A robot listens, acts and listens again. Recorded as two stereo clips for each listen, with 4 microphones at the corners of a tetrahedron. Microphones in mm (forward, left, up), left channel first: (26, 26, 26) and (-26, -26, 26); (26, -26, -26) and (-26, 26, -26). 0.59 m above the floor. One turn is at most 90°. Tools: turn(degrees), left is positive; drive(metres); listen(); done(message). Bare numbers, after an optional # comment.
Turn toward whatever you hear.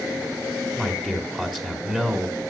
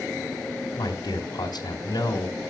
# The man speaking: 55° right.
turn(-55)
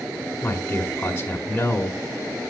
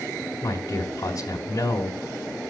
# The man speaking is now 20° right.
turn(-20)
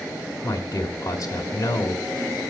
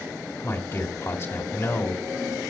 done("Found it: a man speaking, straight ahead, 1 to 2 m away.")